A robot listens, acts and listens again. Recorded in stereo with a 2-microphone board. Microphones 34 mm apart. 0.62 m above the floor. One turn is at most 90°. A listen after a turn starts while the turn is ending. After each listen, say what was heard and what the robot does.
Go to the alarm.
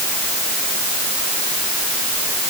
Keep listening.
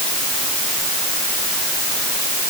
Keep listening.
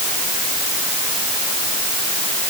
I can't make out an alarm to turn to.